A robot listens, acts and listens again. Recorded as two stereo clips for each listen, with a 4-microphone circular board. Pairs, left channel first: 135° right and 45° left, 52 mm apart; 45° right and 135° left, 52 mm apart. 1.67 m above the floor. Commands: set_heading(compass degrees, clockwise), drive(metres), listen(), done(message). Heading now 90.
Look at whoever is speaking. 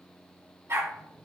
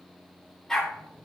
listen()
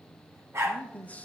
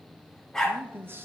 set_heading(280)
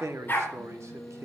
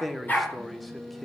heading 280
set_heading(235)
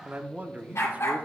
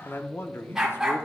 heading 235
set_heading(245)
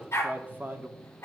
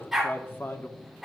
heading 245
done("Found it: a man speaking, straight ahead, under 1 m away.")